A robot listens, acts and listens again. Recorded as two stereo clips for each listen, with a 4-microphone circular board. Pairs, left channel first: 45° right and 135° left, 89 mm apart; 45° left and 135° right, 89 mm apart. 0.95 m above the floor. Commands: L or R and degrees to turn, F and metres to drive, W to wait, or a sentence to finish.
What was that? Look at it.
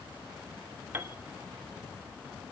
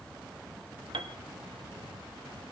R160
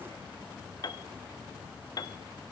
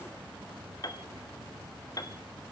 Facing the piano.